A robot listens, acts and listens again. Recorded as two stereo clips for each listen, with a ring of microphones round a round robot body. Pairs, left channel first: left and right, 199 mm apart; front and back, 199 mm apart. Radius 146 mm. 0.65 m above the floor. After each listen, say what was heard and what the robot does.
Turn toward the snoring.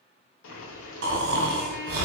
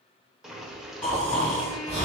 The snoring: 85° right. Turn 85° right.
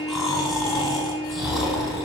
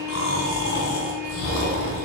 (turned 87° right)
Facing the snoring.